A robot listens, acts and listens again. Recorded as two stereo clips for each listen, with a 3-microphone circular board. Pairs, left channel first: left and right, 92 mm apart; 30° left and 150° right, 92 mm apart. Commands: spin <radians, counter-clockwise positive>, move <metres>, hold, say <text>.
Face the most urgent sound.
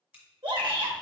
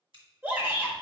spin -1.48
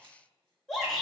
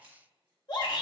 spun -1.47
say Facing the shout.